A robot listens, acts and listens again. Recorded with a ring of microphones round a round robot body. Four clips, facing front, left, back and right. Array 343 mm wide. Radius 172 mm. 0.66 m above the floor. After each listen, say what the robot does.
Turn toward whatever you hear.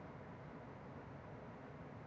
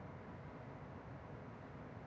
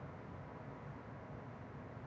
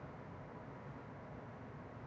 Keep listening.
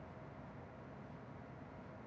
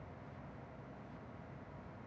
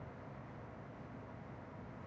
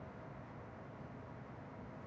Keep listening.
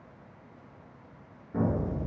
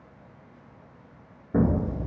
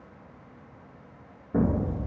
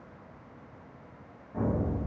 Turn 120° left.
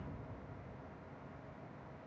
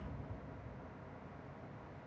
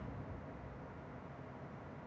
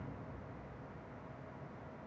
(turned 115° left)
I heard an explosion from this way, but can't make it out now.